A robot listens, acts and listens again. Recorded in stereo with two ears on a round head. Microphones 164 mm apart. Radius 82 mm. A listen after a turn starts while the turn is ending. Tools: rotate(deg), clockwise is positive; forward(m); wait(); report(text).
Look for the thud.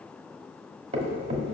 rotate(35)
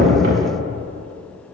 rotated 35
wait()
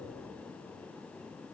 report("I heard a thud, but can't make it out now. It was about straight ahead or 110° right.")